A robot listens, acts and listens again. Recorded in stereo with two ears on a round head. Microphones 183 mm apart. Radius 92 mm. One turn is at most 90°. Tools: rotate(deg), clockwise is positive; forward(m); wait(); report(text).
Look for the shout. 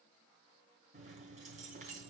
wait()
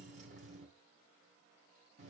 wait()
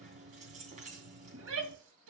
rotate(70)
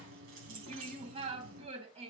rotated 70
rotate(30)
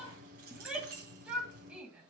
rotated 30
report("Facing the shout, 2 to 4 m away.")